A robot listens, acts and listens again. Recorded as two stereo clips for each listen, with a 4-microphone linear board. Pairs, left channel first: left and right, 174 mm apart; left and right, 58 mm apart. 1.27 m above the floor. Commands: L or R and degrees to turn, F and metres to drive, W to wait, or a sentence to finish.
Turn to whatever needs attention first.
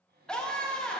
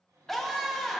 L30
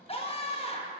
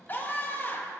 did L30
L145
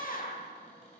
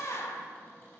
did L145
L55
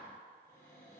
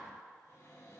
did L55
W
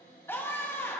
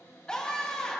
L15
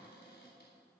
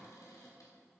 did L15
W
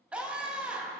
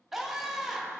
Facing the scream.